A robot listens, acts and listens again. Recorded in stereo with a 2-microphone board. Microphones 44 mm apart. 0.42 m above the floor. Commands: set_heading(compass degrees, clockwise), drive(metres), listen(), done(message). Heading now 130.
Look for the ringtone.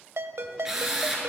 set_heading(205)
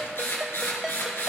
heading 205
set_heading(215)
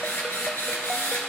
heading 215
listen()
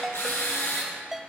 done("Found it: a ringtone, straight ahead, under 1 m away.")